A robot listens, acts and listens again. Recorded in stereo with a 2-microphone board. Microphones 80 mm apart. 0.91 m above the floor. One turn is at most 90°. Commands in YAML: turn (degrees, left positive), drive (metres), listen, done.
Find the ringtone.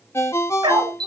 turn: 30
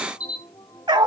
listen: true
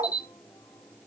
listen: true
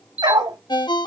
turn: 90
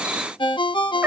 turn: 75
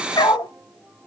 listen: true
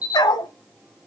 listen: true
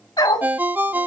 turn: -20
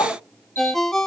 done: "Facing the ringtone, under 1 m away."